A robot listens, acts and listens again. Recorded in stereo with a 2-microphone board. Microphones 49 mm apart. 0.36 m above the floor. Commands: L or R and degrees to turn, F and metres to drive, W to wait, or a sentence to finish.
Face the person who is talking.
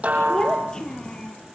L30
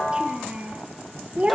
R30
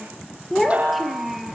Facing the child speaking.